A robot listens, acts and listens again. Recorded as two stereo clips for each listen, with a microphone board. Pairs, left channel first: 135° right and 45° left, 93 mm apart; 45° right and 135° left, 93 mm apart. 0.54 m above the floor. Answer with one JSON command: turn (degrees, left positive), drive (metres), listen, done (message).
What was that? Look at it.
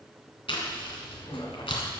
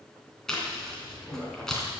{"turn": -130}
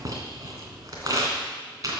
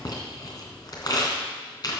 {"done": "Facing the chewing."}